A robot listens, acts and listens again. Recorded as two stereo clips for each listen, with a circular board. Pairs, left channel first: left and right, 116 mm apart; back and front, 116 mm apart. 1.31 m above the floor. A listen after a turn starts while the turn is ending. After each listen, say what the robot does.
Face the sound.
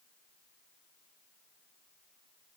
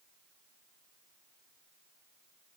Keep listening.
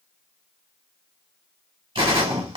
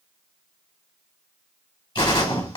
Turn 135° right.
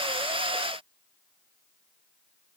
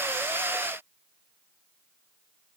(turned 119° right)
Turn 15° right.
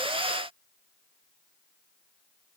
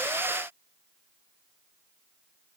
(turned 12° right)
Facing where the gunshot came from. I can't hear it now.